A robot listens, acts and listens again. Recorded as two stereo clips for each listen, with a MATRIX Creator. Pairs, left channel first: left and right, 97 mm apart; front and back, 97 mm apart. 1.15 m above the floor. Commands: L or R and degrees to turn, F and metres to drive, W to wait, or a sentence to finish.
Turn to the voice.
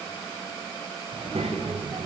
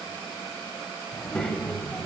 R80
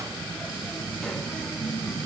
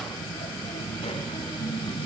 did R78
L10
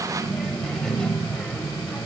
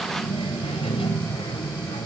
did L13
L10
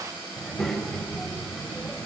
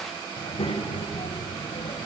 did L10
Facing the child speaking, 2 to 4 m away.